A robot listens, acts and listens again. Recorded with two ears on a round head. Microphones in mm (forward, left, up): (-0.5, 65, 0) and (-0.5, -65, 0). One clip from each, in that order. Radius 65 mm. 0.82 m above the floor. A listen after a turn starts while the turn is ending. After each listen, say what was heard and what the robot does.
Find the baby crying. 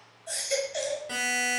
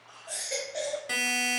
Turn 90° left.
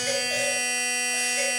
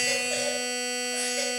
Keep listening.
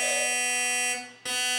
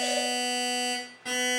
Keep listening.
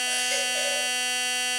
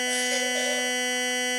I heard a baby crying from this way, but can't make it out now.